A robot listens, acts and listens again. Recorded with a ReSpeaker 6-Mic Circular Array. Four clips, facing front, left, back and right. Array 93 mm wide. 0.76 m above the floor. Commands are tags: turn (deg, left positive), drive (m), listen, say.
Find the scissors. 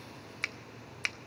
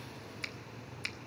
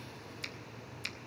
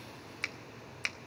<listen/>
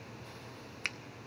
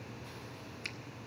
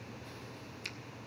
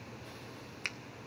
<listen/>
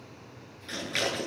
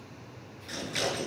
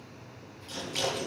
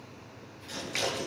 <turn deg="20"/>
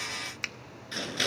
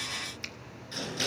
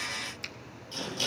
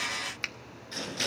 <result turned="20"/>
<say>Facing the scissors.</say>